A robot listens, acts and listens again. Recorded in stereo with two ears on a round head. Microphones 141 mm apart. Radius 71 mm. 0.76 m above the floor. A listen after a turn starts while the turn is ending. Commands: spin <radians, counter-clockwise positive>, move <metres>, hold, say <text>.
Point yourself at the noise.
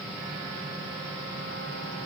hold
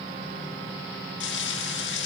spin 1.57
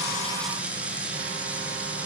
spin -0.17
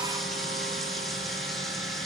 hold
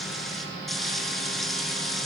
say Facing the frying, over 4 m away.